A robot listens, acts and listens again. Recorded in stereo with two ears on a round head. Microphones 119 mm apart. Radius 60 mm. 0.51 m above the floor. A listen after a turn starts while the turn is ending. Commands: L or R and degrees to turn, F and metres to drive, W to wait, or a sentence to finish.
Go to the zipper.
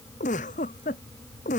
W
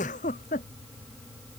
W
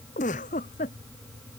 I can't make out a zipper to turn to.